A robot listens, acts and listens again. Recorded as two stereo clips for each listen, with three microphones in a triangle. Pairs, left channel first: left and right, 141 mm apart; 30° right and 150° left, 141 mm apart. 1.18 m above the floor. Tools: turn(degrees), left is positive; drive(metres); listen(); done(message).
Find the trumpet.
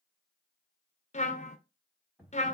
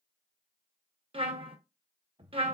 turn(degrees=110)
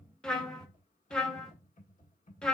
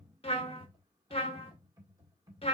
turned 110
done("Facing the trumpet, under 1 m away.")